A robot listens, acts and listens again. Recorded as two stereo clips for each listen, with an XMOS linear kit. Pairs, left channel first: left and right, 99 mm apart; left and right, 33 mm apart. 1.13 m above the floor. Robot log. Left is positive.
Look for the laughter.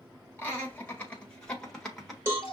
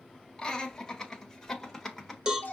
cmd yaw +30
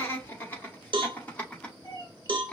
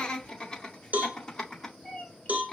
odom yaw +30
cmd yaw +30
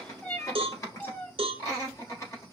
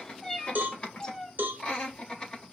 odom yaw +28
note: So it is at 150° left.
cmd yaw +150
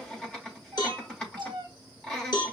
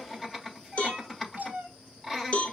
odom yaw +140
note: The laughter is now 10° left.
cmd yaw +10
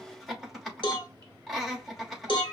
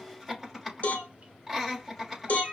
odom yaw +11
end: Facing the laughter.